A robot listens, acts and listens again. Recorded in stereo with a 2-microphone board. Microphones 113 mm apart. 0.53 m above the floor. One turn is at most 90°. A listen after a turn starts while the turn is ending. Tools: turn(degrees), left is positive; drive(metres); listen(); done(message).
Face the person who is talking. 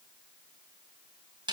listen()
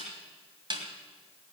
listen()
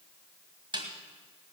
done("I can't make out anyone speaking, only a snare drum.")